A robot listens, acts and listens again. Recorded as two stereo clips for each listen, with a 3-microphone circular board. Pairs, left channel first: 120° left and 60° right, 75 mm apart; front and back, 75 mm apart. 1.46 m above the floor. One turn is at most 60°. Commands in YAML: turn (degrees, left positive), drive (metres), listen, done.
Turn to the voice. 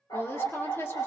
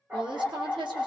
turn: 60
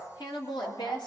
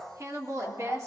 turn: 60
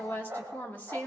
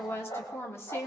turn: 55
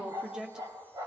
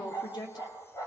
turn: 20
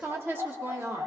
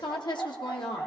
done: "Found it: a woman speaking, straight ahead."